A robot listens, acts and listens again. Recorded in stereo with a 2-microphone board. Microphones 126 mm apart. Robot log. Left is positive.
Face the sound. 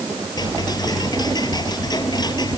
note: The ticking: about 35° left or 145° left.
cmd yaw +35
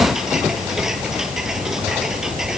end: Found it: ticking, straight ahead.